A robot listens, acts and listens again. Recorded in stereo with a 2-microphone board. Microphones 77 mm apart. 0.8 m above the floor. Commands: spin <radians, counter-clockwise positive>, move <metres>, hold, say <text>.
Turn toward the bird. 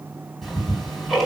hold
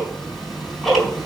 hold
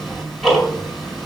say I can't make out a bird, only ticking.